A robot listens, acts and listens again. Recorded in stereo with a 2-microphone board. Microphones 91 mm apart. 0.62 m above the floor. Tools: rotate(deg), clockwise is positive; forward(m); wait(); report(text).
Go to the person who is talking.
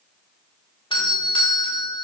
wait()
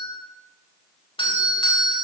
wait()
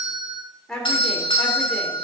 rotate(-30)
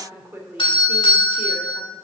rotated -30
rotate(25)
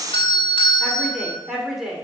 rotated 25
forward(1.0)
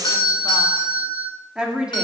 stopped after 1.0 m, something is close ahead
rotate(15)
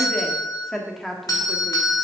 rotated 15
report("I am next to the woman speaking.")